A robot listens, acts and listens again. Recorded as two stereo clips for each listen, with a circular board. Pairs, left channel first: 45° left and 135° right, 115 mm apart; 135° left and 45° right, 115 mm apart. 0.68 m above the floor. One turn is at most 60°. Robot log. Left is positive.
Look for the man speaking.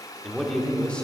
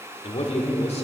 note: The man speaking: 125° left.
cmd yaw +60
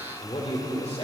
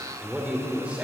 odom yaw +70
note: The man speaking is now 30° left.
cmd yaw +30
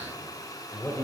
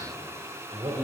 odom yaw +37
note: The man speaking is now 15° right.
cmd yaw -15
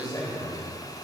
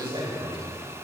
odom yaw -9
note: The man speaking is now 10° right.
cmd yaw -10
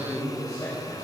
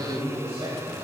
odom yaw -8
note: The man speaking is now 10° right.
cmd yaw -10
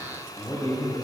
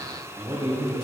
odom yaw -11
end: Found it: a man speaking, straight ahead, over 4 m away.